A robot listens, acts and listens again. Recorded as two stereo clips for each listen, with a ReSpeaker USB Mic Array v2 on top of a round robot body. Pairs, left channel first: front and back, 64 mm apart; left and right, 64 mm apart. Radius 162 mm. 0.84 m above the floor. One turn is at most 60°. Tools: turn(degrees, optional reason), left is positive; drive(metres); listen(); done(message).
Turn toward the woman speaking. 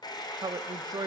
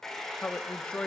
turn(degrees=60, reason="The woman speaking: 165° left.")
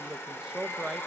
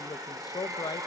turn(degrees=60, reason="The woman speaking is now 100° left.")
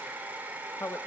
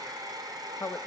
turn(degrees=40, reason="The woman speaking is now 40° left.")
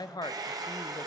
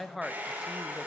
done("Facing the woman speaking.")